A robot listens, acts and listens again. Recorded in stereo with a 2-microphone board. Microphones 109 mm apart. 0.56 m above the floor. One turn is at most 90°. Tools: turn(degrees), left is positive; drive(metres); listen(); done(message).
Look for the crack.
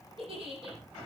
listen()
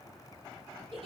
listen()
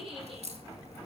turn(degrees=-90)
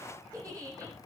done("Facing where the crack came from. I can't hear it now.")